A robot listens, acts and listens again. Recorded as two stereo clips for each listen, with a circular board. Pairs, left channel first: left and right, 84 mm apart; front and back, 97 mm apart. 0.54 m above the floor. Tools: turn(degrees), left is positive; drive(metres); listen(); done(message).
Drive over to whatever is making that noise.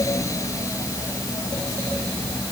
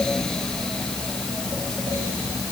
listen()
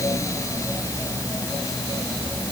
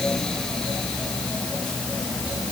listen()
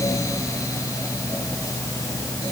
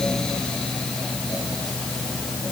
done("I can't make out anything to turn to.")